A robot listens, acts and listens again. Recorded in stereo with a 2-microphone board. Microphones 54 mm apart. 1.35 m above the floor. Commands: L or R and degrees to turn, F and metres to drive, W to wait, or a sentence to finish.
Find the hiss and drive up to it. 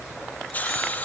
L30
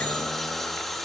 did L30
F1.0
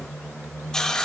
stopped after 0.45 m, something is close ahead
L10
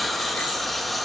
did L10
Blocked. The hiss is further on, straight ahead.